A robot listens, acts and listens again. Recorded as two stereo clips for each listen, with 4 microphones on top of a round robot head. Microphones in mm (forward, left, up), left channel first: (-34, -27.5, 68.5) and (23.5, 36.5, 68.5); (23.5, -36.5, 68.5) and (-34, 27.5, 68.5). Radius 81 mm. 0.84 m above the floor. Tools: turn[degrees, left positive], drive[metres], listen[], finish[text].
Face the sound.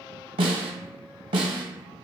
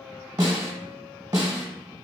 Thought: The snare drum: 75° left.
Action: turn[75]
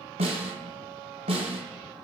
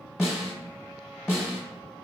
Thought: The snare drum is now 45° left.
Action: turn[45]
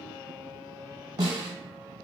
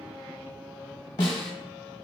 Action: finish[Found it: a snare drum, straight ahead, under 1 m away.]